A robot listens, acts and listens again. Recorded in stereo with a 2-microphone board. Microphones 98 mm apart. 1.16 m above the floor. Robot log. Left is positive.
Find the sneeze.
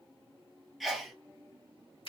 cmd yaw +30
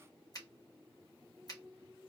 cmd idle
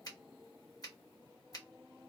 end: I heard a sneeze, but can't make it out now. It was about 30° right or 150° left.